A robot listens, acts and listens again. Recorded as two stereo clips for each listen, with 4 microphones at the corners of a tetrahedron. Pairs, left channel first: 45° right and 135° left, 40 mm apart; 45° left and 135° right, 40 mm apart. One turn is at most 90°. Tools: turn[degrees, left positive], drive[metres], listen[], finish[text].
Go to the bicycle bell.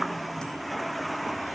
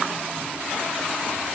Action: listen[]
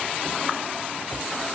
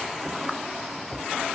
Action: listen[]
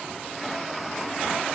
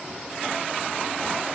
Action: finish[I can't make out a bicycle bell.]